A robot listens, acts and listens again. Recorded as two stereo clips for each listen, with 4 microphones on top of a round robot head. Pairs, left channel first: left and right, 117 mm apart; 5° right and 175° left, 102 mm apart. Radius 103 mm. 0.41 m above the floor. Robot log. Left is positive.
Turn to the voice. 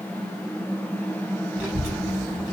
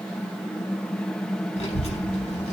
note: The child speaking: 15° right.
cmd yaw -15
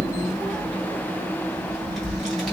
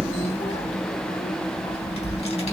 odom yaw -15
end: Facing the child speaking.